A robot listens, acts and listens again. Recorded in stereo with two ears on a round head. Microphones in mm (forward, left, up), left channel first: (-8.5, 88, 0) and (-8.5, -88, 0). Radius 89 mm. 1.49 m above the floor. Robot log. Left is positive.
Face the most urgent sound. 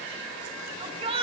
note: The shout: about 30° right or 150° right.
cmd yaw -30
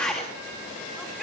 end: Found it: a shout, straight ahead.